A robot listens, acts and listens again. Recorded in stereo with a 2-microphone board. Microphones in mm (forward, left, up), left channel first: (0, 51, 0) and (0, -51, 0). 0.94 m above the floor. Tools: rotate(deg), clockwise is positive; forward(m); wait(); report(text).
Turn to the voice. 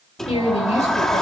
rotate(-90)
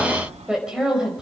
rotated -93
report("Found it: a woman speaking, straight ahead.")